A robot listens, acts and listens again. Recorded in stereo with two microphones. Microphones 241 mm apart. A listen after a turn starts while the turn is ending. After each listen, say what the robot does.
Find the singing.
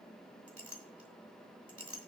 Keep listening.
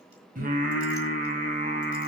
Turn 35° right.
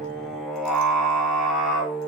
Facing the singing, 2 to 4 m away.